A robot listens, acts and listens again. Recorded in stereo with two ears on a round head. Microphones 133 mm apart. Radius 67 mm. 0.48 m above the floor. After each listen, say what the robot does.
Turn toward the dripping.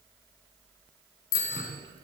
Turn 35° right.
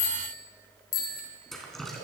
Found it: dripping, straight ahead, 2 to 4 m away.